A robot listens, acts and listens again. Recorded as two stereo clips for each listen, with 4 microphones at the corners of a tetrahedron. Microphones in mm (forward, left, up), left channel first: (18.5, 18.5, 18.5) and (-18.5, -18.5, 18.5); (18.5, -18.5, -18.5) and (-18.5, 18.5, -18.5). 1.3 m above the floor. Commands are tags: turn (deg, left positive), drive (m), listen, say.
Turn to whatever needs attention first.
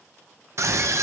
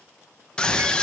<turn deg="-115"/>
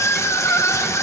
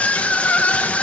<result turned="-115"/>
<turn deg="20"/>
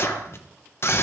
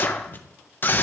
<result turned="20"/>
<say>Facing the scream.</say>